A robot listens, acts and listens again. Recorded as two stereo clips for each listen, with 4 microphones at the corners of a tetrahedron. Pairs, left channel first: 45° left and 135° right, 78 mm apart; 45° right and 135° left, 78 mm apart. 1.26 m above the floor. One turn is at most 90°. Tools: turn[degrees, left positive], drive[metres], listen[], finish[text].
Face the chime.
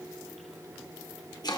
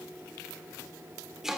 Action: listen[]
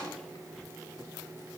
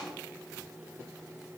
Action: listen[]
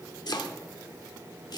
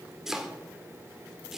Action: finish[I can't make out a chime to turn to.]